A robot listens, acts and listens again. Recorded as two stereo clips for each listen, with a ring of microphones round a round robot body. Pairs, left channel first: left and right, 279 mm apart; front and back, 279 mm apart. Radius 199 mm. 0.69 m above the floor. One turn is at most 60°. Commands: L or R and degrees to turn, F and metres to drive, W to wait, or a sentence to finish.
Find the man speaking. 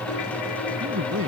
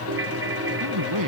R60
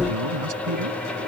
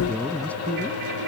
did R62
R60
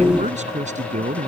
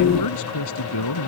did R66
R25
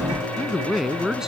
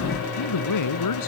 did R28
Facing the man speaking.